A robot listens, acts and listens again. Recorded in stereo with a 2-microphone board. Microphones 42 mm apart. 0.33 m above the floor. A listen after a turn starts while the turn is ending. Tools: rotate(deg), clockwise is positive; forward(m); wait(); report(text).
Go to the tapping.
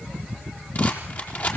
wait()
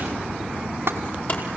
rotate(60)
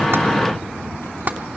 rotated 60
rotate(55)
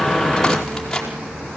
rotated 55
wait()
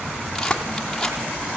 rotate(-20)
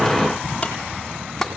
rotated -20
forward(1.0)
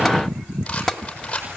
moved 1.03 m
forward(1.0)
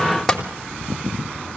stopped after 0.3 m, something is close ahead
report("I am next to the tapping.")